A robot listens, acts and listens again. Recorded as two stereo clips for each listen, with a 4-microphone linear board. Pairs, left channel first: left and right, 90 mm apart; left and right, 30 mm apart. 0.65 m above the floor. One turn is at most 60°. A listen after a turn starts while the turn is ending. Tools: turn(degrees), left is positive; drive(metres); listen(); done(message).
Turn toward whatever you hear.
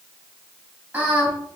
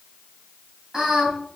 turn(degrees=-15)
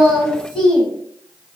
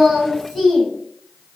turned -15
turn(degrees=30)
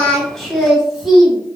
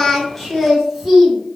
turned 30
done("Found it: singing, straight ahead.")